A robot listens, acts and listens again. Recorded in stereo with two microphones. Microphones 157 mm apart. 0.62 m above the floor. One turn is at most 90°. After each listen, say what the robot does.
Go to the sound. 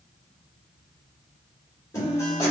Turn 20° left.
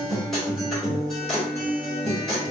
Drive 1.0 m forward.
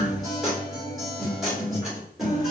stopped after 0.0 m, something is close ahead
Something is in my way. I am facing the guitar but have not reached it.